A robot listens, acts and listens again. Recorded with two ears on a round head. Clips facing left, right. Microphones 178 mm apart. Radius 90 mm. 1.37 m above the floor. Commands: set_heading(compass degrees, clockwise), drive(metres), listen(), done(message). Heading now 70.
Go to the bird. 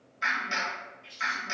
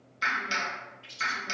set_heading(140)
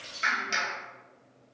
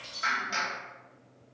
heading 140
drive(1.0)
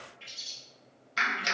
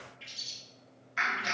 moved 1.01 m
drive(1.0)
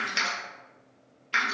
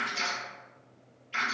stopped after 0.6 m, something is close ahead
listen()
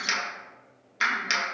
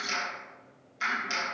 listen()
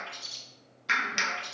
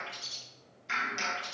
done("I am next to the bird.")